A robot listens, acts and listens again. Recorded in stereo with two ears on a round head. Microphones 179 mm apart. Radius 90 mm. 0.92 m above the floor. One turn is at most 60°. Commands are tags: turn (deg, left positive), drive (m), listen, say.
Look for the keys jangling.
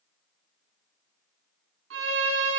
<listen/>
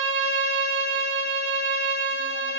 <listen/>
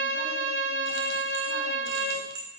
<turn deg="-60"/>
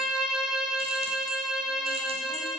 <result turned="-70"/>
<turn deg="-20"/>
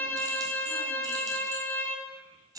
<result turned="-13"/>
<turn deg="-20"/>
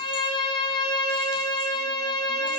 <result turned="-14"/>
<listen/>
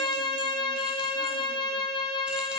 <listen/>
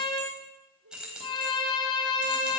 <say>Facing the keys jangling.</say>